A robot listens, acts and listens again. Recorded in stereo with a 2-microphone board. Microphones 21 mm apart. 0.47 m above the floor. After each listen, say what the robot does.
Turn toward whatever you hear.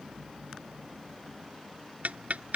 Turn 90° right.
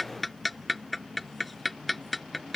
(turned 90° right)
Facing the ticking.